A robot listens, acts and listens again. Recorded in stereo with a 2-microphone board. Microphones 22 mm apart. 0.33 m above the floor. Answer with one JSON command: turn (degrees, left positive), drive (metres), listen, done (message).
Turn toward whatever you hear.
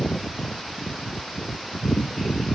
{"listen": true}
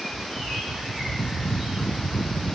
{"listen": true}
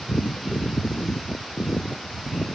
{"done": "I can't make out anything to turn to."}